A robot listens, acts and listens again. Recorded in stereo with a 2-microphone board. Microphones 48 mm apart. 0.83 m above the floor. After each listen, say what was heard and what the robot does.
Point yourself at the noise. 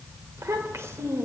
Turn 90° right.
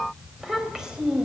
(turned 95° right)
So it is at 10° right. Turn 10° right.
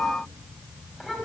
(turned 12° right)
Found it: a child speaking, straight ahead, over 4 m away.